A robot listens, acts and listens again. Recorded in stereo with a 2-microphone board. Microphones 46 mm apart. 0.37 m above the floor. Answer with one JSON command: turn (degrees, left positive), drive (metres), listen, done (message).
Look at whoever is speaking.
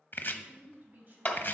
{"turn": -35}
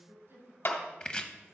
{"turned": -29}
{"turn": -115}
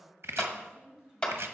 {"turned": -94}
{"turn": -20}
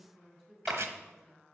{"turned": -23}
{"done": "Found it: a woman speaking, straight ahead, 2 to 4 m away."}